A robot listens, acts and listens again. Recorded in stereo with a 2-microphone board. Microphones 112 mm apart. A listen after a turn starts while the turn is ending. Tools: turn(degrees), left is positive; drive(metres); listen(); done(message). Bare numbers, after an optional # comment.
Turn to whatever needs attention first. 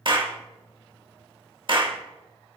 listen()
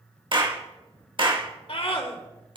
# The scream: about 70° left or 110° left.
turn(70)
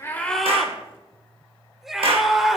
done("Found it: a scream, straight ahead.")